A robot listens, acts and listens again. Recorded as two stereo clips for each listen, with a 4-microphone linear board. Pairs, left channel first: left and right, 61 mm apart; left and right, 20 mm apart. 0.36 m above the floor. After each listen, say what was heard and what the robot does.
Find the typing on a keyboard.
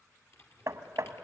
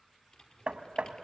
The typing on a keyboard: about 55° left or 125° left. Turn 55° left.
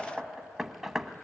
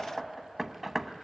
Keep listening.
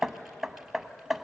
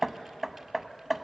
Keep listening.
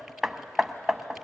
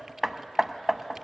I heard typing on a keyboard, but can't make it out now. It was about straight ahead or 70° left.